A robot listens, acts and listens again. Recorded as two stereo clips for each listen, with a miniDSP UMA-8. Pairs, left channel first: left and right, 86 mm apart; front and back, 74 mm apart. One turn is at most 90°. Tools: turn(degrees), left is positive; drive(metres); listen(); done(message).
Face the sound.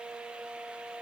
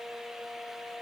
listen()
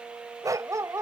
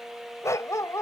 turn(degrees=-40)
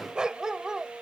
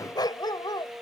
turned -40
done("Found it: a dog barking, straight ahead.")